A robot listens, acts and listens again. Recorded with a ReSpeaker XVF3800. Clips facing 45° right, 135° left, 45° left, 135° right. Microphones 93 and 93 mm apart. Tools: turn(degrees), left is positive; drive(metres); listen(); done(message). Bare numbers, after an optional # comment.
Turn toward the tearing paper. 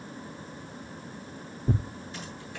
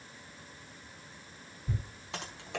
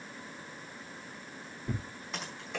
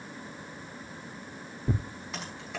# The tearing paper: 75° right.
turn(-75)
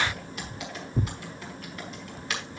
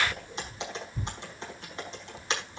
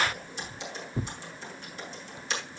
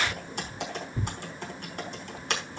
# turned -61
# The tearing paper is now 15° right.
turn(-15)
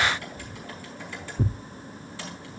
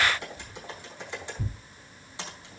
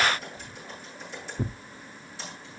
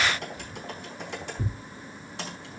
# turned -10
# The tearing paper is now 10° right.
turn(-10)
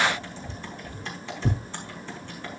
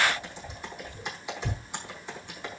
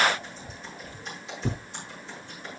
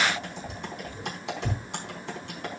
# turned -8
done("Facing the tearing paper, under 1 m away.")